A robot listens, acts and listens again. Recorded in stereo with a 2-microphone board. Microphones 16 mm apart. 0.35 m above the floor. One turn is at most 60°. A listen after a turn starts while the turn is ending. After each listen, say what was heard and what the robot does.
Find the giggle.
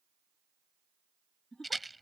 The giggle: about 60° left or 120° left. Turn 60° left.
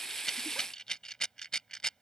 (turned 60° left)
Keep listening.
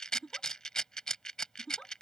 So it is at 55° left. Turn 55° left.
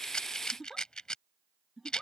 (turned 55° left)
Facing the giggle.